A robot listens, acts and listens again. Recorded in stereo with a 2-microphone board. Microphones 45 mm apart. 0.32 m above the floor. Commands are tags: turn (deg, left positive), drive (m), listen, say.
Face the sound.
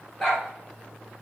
<turn deg="30"/>
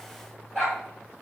<say>Facing the dog barking, 2 to 4 m away.</say>